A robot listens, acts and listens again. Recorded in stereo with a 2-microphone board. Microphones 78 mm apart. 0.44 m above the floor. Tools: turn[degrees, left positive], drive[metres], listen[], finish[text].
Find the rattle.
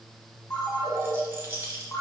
Thought: The rattle: about 30° right or 150° right.
Action: turn[-30]
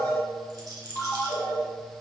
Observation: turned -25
Thought: So it is at 125° right.
Action: turn[-125]
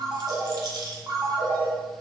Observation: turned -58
Thought: The rattle is now 65° right.
Action: turn[-65]
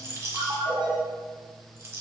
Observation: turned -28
Thought: The rattle is now 40° right.
Action: turn[-40]
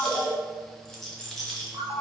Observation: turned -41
Action: finish[Found it: a rattle, straight ahead, 1 to 2 m away.]